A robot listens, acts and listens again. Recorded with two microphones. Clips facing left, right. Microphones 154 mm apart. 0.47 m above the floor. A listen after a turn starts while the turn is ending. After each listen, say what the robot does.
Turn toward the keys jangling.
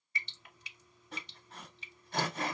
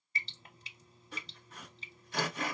Keep listening.
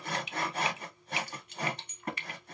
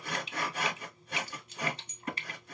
Turn 60° left.
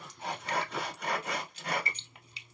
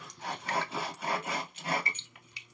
Turn 40° left.
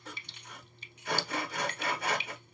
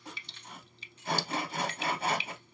Turn 15° left.
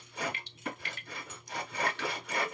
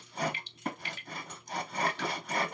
Keep listening.
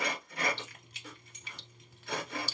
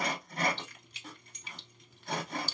Facing the keys jangling, under 1 m away.